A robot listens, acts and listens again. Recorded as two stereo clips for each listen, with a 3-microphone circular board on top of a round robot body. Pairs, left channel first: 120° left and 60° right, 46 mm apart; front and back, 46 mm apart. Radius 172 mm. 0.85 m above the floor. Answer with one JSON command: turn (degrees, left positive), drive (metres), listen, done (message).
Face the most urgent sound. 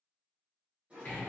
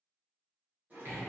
{"listen": true}
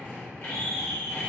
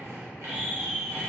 {"turn": 100}
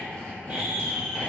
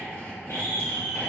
{"turn": 10}
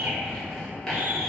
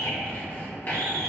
{"listen": true}
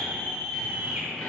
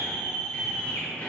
{"done": "Found it: a scream, straight ahead, under 1 m away."}